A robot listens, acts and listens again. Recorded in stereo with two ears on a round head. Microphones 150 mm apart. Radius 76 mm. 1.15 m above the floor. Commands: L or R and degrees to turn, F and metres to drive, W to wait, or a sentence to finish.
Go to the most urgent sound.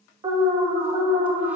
R25
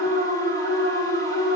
R120
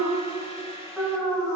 F1.0
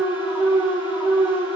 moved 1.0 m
F1.0
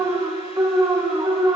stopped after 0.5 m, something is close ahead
R20
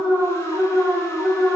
I am next to the alarm.